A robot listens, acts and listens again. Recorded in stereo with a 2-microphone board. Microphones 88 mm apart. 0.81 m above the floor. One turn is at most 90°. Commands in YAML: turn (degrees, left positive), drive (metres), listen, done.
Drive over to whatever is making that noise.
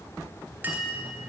turn: -20
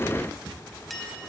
drive: 1.0
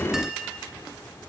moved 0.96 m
drive: 1.0
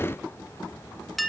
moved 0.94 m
drive: 1.0
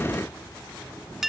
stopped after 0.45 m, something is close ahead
done: "Arrived at the clink, straight ahead."